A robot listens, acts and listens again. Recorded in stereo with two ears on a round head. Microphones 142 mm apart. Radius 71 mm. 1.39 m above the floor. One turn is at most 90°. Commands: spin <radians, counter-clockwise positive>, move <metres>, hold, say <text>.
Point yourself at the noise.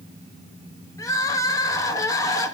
spin 0.35
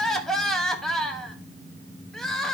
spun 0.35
say Facing the crying, 1 to 2 m away.